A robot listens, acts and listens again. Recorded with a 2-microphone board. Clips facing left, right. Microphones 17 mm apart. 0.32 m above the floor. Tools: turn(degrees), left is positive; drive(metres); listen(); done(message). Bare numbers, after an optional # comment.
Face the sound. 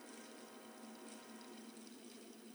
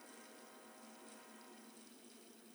listen()
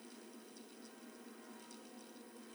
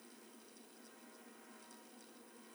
listen()
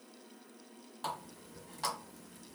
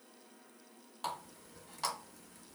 turn(-30)
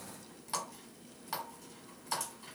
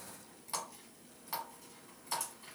# So it is at 20° left.
turn(20)
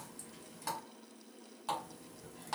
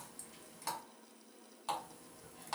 done("Facing the running tap.")